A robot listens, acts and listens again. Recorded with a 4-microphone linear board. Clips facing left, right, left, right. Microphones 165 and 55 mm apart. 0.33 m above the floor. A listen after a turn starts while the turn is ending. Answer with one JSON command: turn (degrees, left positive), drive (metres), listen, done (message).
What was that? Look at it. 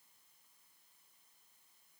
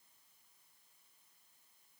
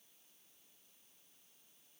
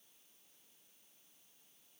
{"listen": true}
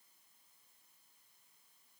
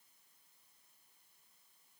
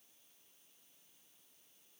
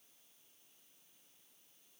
{"listen": true}
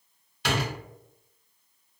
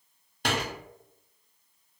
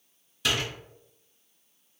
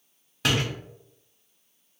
{"turn": -45}
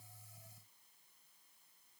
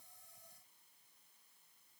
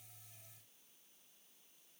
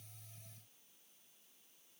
{"listen": true}
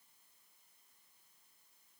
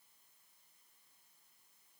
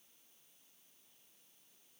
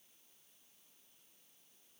{"done": "I heard a door slam, but can't make it out now. It was about straight ahead or 90° right."}